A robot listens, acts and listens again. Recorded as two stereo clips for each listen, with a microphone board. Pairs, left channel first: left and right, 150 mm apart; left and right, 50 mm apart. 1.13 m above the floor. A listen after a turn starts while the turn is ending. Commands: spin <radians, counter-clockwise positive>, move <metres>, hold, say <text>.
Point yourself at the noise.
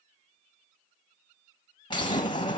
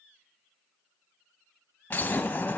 spin 0.61
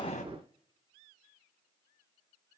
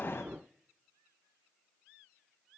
hold
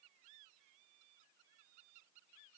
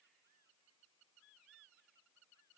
say I heard an explosion, but can't make it out now. It was about straight ahead or 110° left.